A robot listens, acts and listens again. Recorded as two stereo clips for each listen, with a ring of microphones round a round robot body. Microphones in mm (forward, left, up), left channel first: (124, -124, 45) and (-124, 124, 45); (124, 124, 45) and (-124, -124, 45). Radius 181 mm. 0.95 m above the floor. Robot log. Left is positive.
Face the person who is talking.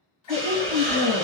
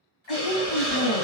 note: The woman speaking: 60° left.
cmd yaw +60
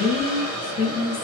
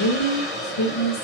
note: The woman speaking is now 30° left.
cmd yaw +30
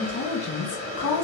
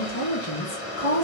end: Found it: a woman speaking, straight ahead.